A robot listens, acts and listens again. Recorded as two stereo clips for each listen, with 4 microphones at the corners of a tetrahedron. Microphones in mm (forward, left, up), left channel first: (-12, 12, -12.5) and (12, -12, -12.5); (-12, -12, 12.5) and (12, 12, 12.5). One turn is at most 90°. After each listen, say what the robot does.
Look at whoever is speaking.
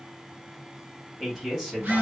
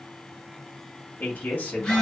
Turn 90° right.
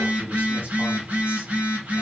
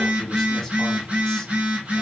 Turn 55° right.
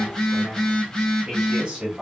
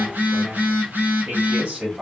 Found it: a man speaking, straight ahead, 1 to 2 m away.